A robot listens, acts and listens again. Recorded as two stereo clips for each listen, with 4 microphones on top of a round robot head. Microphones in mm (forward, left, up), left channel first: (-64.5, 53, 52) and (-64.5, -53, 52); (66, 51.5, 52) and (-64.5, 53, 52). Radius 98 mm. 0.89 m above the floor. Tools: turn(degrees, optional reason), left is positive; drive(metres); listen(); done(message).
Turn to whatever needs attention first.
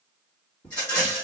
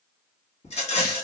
listen()
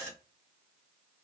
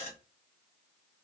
listen()
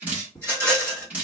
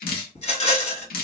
done("I can't make out anything urgent, only dripping and a rattle.")